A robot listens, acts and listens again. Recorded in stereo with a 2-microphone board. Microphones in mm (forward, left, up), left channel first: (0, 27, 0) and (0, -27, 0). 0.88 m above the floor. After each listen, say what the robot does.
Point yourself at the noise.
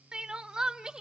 Turn 30° right.
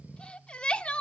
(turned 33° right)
Turn 20° left.
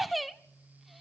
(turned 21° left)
Found it: crying, straight ahead.